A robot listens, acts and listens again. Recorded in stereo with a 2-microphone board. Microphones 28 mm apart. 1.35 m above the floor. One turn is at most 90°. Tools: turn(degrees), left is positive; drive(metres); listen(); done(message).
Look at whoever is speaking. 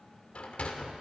listen()
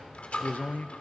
turn(degrees=90)
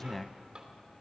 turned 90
turn(degrees=10)
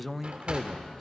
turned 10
done("Found it: a man speaking, straight ahead, under 1 m away.")